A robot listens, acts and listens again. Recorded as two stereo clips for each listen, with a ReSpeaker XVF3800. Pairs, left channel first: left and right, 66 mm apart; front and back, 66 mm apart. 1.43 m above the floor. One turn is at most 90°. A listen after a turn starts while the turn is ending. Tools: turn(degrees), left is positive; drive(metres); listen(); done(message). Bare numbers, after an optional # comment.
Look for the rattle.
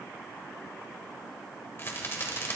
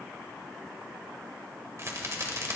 # The rattle: 140° left.
turn(90)
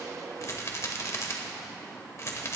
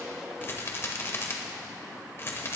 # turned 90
# The rattle is now 50° left.
turn(50)
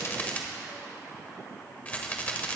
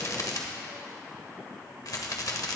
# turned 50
# The rattle is now 25° left.
turn(25)
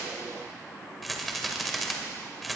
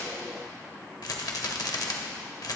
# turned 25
done("Facing the rattle.")